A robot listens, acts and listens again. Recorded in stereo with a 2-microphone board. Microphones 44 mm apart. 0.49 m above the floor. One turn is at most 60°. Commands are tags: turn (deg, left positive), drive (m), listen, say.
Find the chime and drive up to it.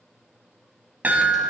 <turn deg="-40"/>
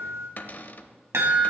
<turn deg="-60"/>
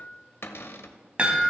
<turn deg="-25"/>
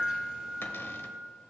<turn deg="-20"/>
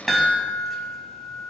<drive m="1.0"/>
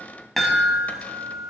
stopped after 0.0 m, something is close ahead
<say>Something is in my way. I am facing the chime but have not reached it.</say>